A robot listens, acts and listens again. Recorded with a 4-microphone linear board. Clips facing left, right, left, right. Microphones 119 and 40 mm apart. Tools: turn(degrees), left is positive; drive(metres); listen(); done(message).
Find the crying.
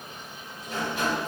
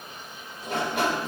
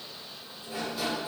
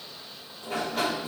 listen()
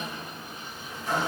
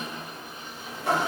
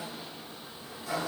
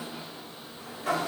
listen()
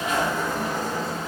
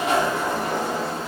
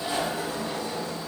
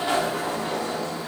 done("I can't make out crying to turn to.")